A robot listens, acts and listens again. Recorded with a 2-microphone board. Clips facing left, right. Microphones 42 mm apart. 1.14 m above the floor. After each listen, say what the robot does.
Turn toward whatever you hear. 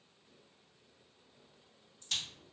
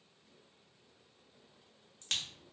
Turn 70° right.
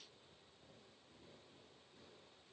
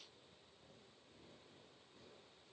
Keep listening.
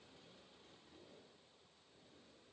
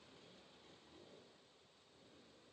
I heard a crack, but can't make it out now. It was about straight ahead or 40° right.